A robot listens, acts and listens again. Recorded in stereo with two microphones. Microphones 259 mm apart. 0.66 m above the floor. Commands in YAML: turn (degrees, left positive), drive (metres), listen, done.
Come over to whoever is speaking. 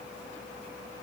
listen: true
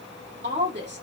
turn: -45
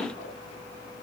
listen: true
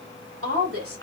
turn: -85
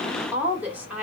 drive: 1.0
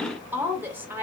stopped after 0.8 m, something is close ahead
turn: -10
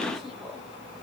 done: "Arrived at the woman speaking, straight ahead."